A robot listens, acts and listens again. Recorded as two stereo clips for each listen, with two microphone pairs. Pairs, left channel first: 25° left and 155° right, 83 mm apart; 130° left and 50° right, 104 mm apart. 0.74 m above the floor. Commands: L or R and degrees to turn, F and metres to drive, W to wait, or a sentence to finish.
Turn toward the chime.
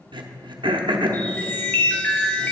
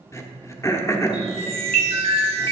R40
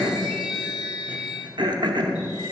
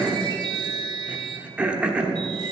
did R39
Found it: a chime, straight ahead.